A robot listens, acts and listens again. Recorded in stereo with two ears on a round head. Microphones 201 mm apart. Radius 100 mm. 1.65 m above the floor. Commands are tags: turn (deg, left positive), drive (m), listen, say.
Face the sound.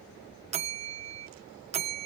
<turn deg="-30"/>
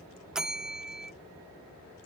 <say>Facing the bell.</say>